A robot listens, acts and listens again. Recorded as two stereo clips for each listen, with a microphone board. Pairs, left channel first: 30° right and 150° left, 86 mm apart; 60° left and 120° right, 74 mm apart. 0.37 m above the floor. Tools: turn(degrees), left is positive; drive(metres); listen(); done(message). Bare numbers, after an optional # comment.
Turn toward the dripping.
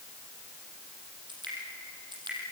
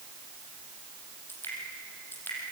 # The dripping: 125° left.
turn(125)
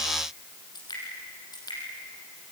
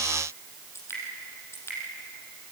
done("Facing the dripping, over 4 m away.")